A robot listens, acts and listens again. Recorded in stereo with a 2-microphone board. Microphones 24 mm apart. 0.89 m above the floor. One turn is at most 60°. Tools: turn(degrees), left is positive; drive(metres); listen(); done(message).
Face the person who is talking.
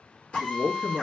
turn(degrees=25)
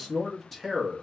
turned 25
done("Found it: a man speaking, straight ahead, 1 to 2 m away.")